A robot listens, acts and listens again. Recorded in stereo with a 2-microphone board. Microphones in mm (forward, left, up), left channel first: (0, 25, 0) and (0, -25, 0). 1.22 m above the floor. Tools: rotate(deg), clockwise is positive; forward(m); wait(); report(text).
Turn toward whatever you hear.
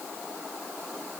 wait()
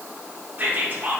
rotate(30)
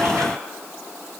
wait()
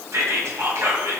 rotate(115)
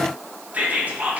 rotate(30)
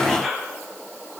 report("Facing the whispering, 1 to 2 m away.")